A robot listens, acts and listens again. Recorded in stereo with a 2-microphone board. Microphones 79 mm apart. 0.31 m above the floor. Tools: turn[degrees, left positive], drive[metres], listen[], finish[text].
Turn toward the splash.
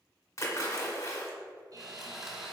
Thought: The splash: about 45° left or 135° left.
Action: turn[45]
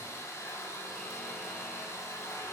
Action: listen[]
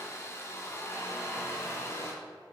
Action: finish[I heard a splash, but can't make it out now. It was about straight ahead or 90° left.]